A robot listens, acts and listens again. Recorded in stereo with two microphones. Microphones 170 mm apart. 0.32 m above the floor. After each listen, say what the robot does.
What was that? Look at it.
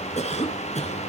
Turn 40° left.
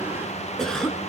Found it: a cough, straight ahead, over 4 m away.